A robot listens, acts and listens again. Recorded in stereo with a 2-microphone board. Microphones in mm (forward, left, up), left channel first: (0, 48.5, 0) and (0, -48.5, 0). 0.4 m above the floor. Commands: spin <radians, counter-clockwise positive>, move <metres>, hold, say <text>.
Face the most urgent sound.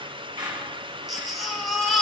spin 0.52
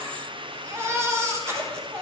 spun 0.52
spin -0.52
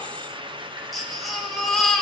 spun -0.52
say Facing the baby crying, 2 to 4 m away.